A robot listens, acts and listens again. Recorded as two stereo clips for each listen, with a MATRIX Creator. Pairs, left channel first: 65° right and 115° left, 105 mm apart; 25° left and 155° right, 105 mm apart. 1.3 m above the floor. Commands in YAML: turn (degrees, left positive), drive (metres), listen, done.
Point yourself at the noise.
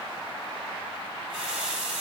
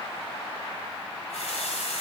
turn: 30
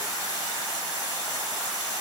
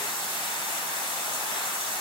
turn: -20
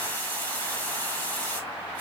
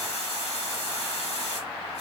done: "Facing the running tap."